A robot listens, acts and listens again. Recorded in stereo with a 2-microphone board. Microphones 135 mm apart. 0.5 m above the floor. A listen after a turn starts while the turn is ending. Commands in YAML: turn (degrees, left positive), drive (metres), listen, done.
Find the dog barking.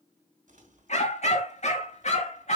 turn: 60
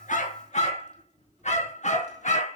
turn: 65
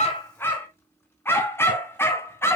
turn: 20
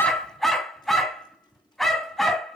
done: "Found it: a dog barking, straight ahead."